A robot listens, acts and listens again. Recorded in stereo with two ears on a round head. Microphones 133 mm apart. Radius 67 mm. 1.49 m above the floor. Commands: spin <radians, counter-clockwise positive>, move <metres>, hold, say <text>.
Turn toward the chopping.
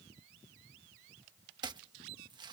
spin -0.52
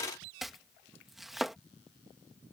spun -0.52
say Facing the chopping.